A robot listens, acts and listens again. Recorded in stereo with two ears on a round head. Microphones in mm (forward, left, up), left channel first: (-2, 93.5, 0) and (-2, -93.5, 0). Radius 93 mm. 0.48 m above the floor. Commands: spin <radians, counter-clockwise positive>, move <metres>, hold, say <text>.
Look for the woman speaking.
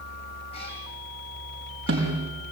hold
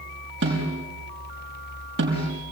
hold
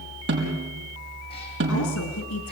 spin 1.57
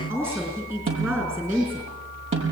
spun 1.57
spin -0.17
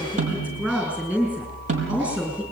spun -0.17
say Found it: a woman speaking, straight ahead.